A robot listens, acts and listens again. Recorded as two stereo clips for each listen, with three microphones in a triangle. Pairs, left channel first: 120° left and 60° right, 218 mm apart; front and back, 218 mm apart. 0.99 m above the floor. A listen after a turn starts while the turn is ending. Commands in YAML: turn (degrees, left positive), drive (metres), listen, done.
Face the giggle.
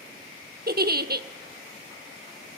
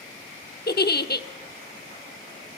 turn: -30
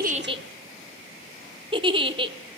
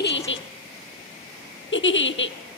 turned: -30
done: "Facing the giggle, under 1 m away."